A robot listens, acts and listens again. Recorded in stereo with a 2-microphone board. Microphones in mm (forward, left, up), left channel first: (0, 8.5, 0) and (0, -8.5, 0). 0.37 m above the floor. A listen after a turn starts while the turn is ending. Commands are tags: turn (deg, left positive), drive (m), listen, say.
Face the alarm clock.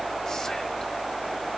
<listen/>
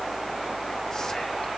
<listen/>
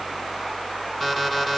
<turn deg="30"/>
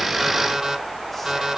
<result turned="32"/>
<turn deg="-30"/>
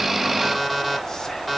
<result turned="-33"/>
<say>Facing the alarm clock.</say>